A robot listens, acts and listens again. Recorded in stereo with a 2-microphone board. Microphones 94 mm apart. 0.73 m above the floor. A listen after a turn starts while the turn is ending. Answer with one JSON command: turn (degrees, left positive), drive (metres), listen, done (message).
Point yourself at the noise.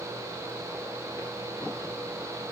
{"listen": true}
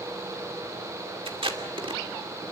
{"turn": -70}
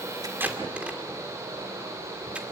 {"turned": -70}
{"turn": -10}
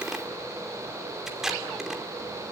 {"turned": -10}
{"done": "Found it: tape being pulled, straight ahead."}